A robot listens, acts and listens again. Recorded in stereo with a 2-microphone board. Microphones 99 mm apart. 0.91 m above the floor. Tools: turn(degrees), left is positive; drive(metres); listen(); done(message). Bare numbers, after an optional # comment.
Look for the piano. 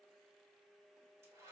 listen()
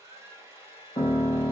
# The piano: about 60° left or 120° left.
turn(60)
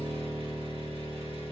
done("Facing the piano.")